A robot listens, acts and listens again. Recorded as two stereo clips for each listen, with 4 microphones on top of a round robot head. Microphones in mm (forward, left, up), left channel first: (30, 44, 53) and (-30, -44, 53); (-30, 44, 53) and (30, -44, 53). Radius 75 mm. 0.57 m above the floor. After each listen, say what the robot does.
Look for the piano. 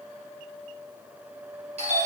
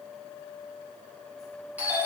Keep listening.
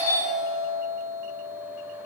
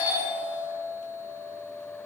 Keep listening.
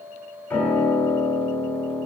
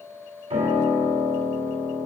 Turn 25° right.
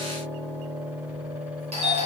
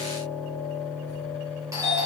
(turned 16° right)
Found it: a piano, straight ahead, 1 to 2 m away.